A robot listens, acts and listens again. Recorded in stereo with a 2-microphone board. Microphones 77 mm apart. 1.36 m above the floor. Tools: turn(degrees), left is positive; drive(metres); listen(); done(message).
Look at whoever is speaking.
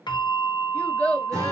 turn(degrees=20)
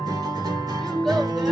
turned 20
listen()
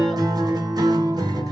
listen()
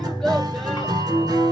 done("I heard a child speaking, but can't make it out now. It was about straight ahead or 140° left.")